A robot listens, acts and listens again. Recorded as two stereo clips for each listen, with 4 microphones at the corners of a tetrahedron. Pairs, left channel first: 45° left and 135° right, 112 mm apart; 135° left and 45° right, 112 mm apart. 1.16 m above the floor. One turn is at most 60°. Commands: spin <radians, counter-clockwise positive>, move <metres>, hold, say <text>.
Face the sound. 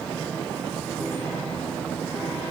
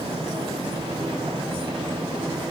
hold
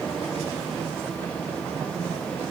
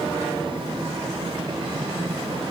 hold
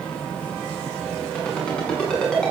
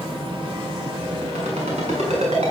spin -0.61
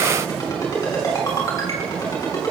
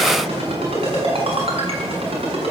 spin -0.26
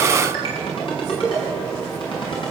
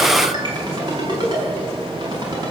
say Facing the ringtone, over 4 m away.